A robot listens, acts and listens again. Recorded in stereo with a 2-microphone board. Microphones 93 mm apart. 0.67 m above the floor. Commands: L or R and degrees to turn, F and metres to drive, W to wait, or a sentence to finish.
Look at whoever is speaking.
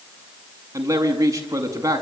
R35
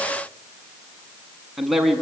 Facing the man speaking, over 4 m away.